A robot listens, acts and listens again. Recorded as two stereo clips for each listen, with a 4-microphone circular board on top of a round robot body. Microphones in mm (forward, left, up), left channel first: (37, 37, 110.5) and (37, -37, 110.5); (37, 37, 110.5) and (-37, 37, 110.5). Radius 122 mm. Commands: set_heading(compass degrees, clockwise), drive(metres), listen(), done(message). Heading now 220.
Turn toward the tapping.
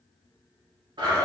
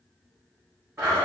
listen()
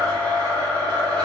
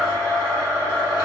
listen()
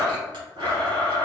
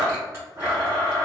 done("I can't make out tapping, only a blender.")